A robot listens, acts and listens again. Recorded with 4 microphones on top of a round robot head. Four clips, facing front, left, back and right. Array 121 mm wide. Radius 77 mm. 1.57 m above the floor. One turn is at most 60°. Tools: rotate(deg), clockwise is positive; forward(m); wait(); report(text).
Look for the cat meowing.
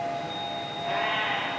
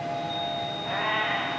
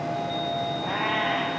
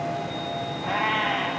rotate(60)
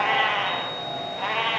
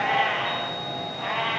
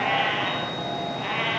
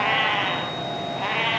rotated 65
rotate(60)
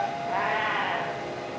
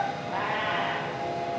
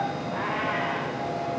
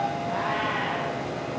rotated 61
rotate(20)
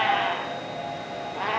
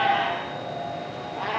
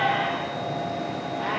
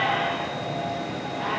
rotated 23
report("Found it: a cat meowing, straight ahead.")